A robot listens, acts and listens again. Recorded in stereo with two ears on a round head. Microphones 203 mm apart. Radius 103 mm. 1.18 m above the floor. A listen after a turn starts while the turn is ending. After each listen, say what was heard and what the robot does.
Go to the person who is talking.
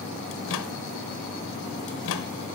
Keep listening.
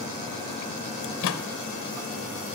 Keep listening.
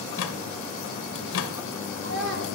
The child speaking: about 55° right or 125° right. Turn 55° right.
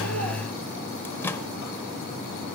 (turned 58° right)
Keep listening.
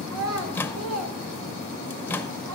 So it is at 65° right. Turn 65° right.
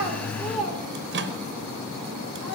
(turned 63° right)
Drive 1.0 m forward.
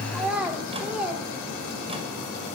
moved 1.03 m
Drive 1.0 m forward.
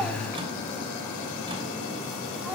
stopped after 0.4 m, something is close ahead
Keep listening.
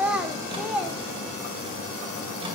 Arrived at the child speaking, straight ahead.